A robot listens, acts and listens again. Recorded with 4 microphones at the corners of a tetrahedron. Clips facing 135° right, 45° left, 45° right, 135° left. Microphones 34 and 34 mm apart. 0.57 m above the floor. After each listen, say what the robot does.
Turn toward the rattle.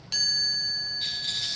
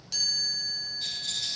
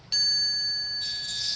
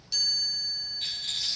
Turn 170° left.
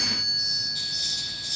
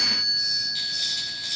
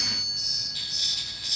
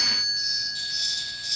Keep listening.
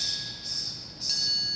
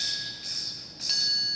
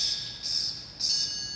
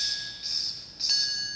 Keep listening.
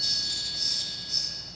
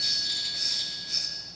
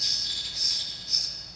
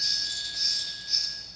Facing the rattle.